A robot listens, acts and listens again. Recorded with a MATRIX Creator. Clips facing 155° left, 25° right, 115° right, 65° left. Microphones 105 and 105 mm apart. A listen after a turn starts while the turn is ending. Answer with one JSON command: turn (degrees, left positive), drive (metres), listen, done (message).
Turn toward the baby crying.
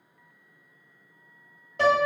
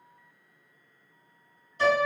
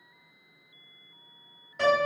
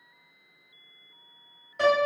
{"listen": true}
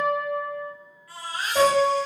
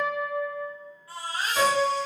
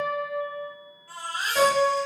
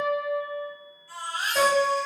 {"turn": -85}
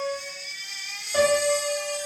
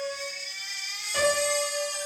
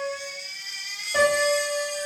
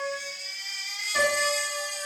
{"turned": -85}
{"turn": -20}
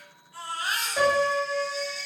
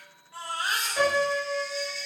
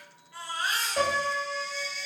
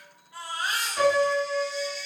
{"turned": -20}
{"done": "Found it: a baby crying, straight ahead."}